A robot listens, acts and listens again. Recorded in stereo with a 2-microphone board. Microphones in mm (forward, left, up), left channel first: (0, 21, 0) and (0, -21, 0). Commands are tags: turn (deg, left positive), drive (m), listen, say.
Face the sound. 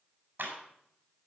<turn deg="-60"/>
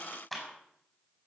<say>Facing the clap, over 4 m away.</say>